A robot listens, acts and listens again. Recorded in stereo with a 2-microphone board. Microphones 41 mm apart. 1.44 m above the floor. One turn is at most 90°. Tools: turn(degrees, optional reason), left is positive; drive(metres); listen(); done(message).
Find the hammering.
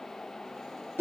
listen()
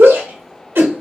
listen()
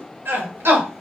done("I can't make out hammering, only a shout.")